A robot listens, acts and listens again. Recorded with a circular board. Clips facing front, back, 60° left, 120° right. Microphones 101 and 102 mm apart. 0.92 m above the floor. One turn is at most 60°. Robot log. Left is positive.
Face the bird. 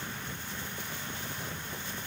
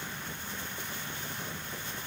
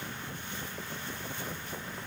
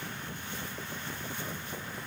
cmd idle
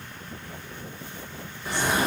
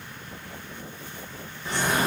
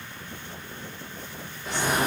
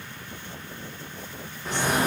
note: The bird: 80° right.
cmd yaw -60
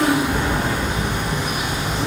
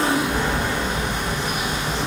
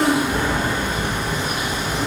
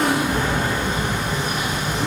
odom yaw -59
note: The bird is now 20° right.
cmd yaw -20
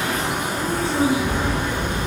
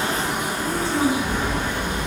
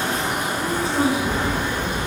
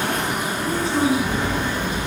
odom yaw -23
end: Facing the bird.